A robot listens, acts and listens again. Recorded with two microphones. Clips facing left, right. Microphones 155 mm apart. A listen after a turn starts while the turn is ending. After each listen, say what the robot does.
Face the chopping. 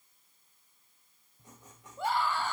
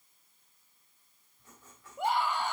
Keep listening.
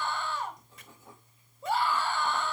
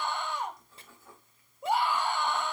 Keep listening.
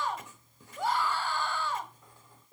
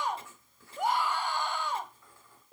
I can't make out chopping to turn to.